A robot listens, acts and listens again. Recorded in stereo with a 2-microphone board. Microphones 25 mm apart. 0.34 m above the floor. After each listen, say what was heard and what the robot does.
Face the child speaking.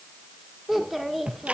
Turn 30° right.
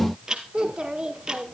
So it is at 140° right. Turn 140° right.
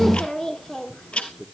The child speaking is now 25° left. Turn 25° left.
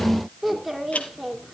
Found it: a child speaking, straight ahead, 2 to 4 m away.